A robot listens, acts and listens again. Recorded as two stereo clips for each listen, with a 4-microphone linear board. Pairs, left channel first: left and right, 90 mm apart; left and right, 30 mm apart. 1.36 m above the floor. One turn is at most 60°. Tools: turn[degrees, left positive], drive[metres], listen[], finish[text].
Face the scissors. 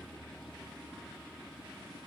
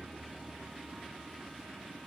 Action: listen[]
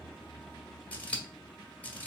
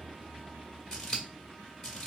Thought: The scissors: about 15° left or 165° left.
Action: turn[15]
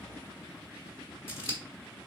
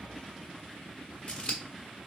Thought: So it is at 150° left.
Action: turn[60]
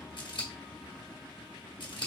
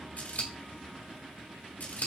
Thought: The scissors is now 105° left.
Action: turn[60]
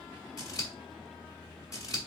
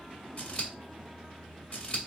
Thought: The scissors is now 45° left.
Action: turn[45]
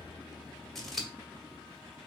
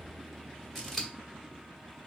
Action: finish[Found it: scissors, straight ahead.]